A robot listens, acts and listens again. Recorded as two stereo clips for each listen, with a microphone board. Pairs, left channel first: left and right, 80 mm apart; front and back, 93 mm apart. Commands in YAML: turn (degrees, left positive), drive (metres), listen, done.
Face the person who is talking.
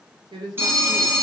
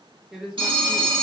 turn: -95
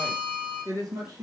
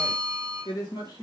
turn: -45
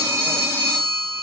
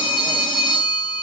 listen: true
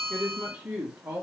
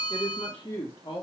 turn: -25
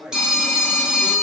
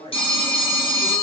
done: "Found it: a woman speaking, straight ahead."